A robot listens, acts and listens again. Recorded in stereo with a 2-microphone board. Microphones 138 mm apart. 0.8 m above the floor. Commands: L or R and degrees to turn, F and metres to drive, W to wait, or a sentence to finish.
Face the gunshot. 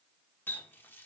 W
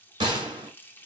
R35
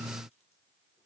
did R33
W
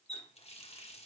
I heard a gunshot, but can't make it out now. It was about 5° right or 110° right.